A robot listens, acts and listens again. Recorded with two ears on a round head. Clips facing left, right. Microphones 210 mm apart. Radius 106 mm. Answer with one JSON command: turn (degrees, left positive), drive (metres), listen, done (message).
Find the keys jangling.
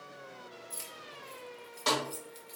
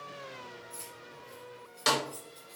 {"turn": 40}
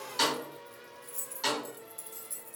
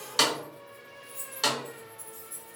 {"turn": 45}
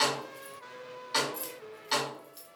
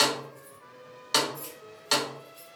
{"turn": 120}
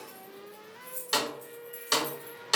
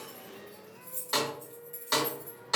{"done": "Found it: keys jangling, straight ahead."}